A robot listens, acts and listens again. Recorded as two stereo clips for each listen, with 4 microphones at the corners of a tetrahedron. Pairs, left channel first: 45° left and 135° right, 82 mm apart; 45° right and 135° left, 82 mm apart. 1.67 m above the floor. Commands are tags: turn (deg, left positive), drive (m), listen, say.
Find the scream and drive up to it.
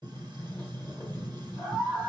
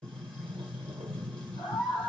<turn deg="-85"/>
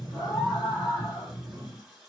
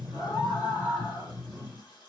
<turn deg="-10"/>
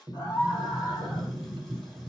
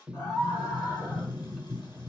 <drive m="1.0"/>
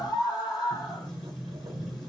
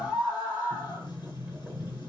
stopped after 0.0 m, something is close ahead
<say>Something is in my way. I am facing the scream but have not reached it.</say>